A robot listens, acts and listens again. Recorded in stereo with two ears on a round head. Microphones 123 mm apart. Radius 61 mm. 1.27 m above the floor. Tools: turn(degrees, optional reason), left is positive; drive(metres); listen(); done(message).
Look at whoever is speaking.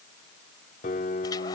listen()
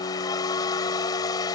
listen()
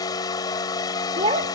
turn(degrees=-45, reason="The child speaking: about 45° right or 135° right.")
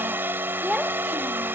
done("Facing the child speaking.")